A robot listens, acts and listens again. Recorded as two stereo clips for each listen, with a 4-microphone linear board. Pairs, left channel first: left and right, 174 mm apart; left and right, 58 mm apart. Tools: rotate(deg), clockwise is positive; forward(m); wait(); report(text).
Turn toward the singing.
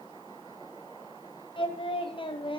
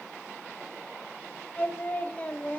rotate(-30)
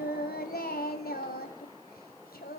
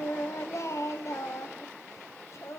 rotate(-120)
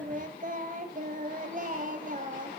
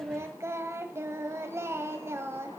rotate(50)
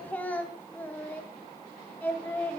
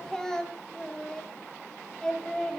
rotate(-10)
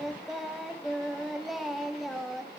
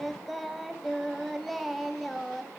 report("Facing the singing.")